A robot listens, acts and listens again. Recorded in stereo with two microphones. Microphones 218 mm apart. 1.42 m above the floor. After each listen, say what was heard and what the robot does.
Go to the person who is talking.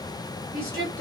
Turn 90° right.
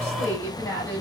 So it is at 15° left. Turn 15° left.
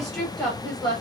Drive 1.0 m forward.
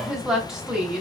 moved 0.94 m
Drive 1.0 m forward.
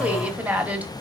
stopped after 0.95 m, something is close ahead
I am next to the woman speaking.